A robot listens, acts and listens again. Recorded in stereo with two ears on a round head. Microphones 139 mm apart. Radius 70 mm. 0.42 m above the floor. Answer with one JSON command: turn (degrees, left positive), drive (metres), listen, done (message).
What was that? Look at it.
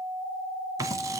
{"turn": -25}
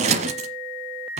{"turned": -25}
{"turn": -130}
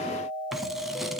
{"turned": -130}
{"done": "Facing the scissors."}